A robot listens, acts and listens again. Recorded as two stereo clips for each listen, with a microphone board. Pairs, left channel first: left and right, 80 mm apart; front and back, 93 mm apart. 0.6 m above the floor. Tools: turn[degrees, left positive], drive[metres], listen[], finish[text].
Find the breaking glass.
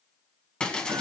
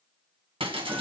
Thought: The breaking glass: 170° left.
Action: turn[170]
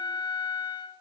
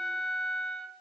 Action: finish[Facing where the breaking glass came from. I can't hear it now.]